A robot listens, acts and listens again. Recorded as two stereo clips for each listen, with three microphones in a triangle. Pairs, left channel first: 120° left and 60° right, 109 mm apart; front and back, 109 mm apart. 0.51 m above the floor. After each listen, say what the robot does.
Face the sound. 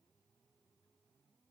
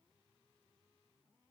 Keep listening.
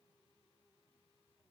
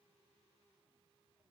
Keep listening.
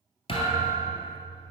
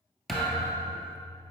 Turn 85° left.
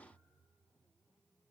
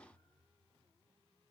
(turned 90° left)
Facing where the thud came from. I can't hear it now.